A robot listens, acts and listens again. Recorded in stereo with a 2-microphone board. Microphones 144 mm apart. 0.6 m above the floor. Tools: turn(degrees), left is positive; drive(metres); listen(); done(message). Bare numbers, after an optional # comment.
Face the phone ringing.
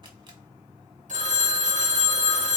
# The phone ringing: about 55° right or 125° right.
turn(-55)
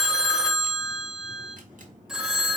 done("Found it: a phone ringing, straight ahead.")